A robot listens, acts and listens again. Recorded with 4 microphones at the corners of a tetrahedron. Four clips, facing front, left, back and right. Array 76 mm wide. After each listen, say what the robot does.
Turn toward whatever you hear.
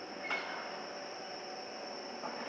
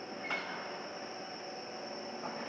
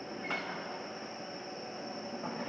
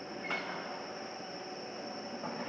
Keep listening.
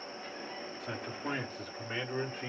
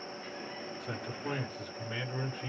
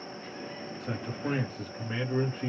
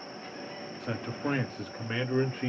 Turn 80° right.
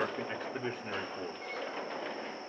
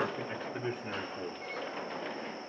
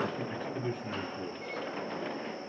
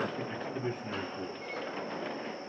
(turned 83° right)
Turn 15° left.
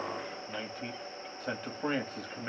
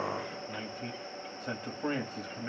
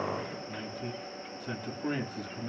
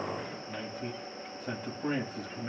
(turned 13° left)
Facing the man speaking, 2 to 4 m away.